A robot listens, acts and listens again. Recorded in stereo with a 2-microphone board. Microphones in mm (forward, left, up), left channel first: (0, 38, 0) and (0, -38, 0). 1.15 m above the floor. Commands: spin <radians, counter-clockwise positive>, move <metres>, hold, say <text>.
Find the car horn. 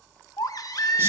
hold
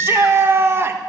hold
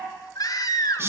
say I can't make out a car horn, only a baby crying and a shout.